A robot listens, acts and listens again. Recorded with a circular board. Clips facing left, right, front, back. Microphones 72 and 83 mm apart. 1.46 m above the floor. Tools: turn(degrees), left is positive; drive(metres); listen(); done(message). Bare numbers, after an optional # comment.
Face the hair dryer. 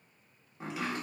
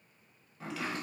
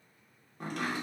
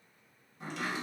listen()
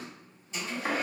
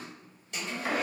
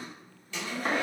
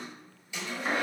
# The hair dryer: 105° right.
turn(-105)
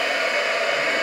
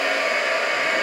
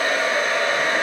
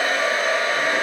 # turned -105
# The hair dryer is now 25° right.
turn(-25)
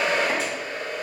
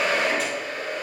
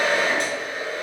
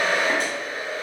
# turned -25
done("Facing the hair dryer, 1 to 2 m away.")